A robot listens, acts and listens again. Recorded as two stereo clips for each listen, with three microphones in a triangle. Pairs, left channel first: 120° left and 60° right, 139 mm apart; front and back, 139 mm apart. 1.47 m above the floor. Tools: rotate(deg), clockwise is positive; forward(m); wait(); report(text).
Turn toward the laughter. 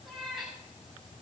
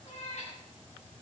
wait()
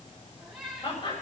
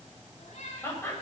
rotate(-70)
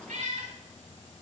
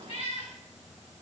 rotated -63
rotate(-10)
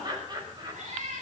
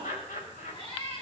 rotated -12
report("Found it: laughter, straight ahead, over 4 m away.")